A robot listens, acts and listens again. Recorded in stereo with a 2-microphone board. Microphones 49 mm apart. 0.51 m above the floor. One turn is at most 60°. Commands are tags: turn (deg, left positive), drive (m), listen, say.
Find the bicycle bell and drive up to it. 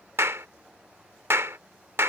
<listen/>
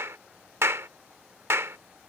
<listen/>
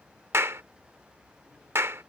<say>I can't make out a bicycle bell, only a clap.</say>